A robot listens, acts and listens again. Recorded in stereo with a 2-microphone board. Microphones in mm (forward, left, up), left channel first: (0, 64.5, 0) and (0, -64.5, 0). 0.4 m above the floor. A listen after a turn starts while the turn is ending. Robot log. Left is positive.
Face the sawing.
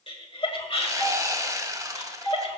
note: The sawing: about 25° right or 155° right.
cmd yaw -25
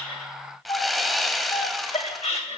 end: Facing the sawing, under 1 m away.